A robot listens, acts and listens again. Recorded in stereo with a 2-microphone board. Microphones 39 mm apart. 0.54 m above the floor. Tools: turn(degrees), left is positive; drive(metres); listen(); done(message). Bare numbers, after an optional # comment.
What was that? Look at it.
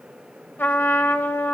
# The trumpet: about 65° left or 115° left.
turn(65)
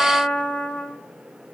# So it is at 40° left.
turn(40)
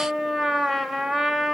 done("Found it: a trumpet, straight ahead, 1 to 2 m away.")